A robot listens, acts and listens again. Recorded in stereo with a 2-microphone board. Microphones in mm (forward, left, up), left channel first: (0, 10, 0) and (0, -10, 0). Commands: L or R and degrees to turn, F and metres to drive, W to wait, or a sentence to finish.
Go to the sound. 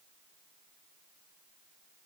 W
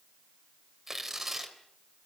R15
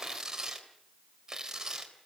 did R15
R150
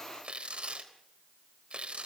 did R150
R65
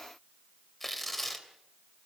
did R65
L10
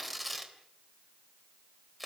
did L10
F1.0
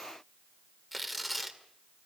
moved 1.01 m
F1.0
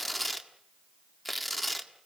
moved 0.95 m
F1.0
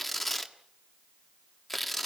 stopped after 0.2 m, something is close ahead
L10
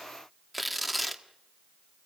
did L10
I am next to the tearing paper.